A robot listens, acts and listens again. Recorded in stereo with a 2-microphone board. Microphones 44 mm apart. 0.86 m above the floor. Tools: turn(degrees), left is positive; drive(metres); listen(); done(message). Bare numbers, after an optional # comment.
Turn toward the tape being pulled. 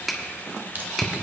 # The tape being pulled: about 45° right or 135° right.
turn(-45)
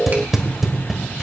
done("Found it: tape being pulled, straight ahead, 1 to 2 m away.")